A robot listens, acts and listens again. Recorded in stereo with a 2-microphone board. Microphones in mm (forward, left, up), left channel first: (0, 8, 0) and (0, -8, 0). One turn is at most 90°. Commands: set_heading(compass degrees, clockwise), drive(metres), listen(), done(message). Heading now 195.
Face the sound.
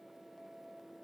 listen()
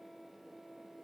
listen()
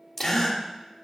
set_heading(175)
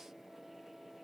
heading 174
listen()
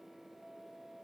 done("I heard a gasp, but can't make it out now. It was about straight ahead or 135° left.")